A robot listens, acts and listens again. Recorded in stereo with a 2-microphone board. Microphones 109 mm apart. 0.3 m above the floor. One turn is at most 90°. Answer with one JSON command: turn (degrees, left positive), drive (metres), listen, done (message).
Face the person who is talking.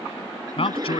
{"turn": 60}
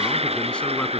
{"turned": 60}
{"listen": true}
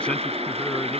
{"listen": true}
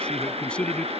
{"turn": 10}
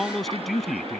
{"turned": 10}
{"done": "Found it: a man speaking, straight ahead."}